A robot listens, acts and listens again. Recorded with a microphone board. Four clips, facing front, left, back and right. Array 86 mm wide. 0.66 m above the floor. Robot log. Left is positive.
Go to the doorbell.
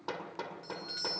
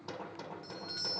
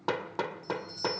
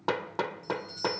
note: The doorbell: 30° left.
cmd yaw +30
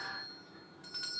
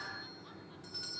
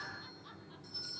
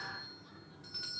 note: The doorbell is now 10° right.
cmd yaw -10
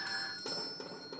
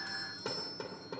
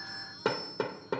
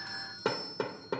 cmd fwd 1.0
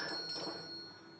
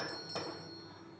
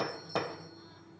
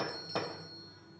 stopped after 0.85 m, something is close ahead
note: The doorbell is now 10° right.
cmd yaw -10
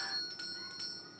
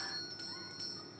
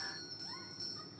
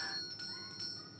end: Blocked. The doorbell is further on, straight ahead.